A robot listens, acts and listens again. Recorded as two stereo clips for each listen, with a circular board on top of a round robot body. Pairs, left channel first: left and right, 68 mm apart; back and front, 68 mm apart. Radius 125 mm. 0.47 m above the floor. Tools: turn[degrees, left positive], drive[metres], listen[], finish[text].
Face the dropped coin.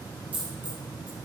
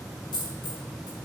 Thought: The dropped coin: 160° right.
Action: turn[-160]
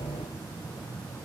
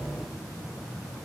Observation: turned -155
Action: finish[I heard a dropped coin from this way, but can't make it out now.]